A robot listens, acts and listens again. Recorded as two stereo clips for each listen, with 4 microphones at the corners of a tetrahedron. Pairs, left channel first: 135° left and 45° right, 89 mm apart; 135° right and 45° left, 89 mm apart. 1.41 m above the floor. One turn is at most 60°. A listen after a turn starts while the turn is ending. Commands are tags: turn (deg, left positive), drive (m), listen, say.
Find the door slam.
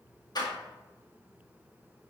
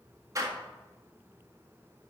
<turn deg="60"/>
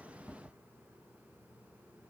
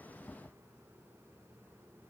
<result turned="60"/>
<turn deg="35"/>
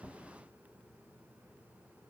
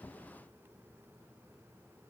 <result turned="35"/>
<say>Facing where the door slam came from. I can't hear it now.</say>